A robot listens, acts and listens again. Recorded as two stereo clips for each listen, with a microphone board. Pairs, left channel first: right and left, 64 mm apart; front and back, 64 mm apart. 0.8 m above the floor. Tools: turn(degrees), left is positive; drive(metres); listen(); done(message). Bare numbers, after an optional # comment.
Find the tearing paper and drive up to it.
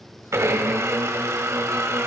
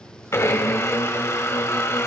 listen()
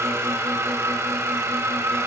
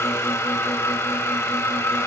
listen()
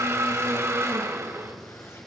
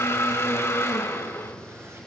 done("I can't make out tearing paper, only a blender.")